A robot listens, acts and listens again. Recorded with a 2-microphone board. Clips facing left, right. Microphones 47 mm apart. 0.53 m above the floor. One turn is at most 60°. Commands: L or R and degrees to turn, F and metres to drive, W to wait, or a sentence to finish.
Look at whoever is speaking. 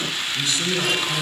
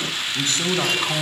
R45
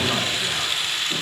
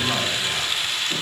W
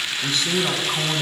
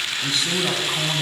Facing the man speaking, over 4 m away.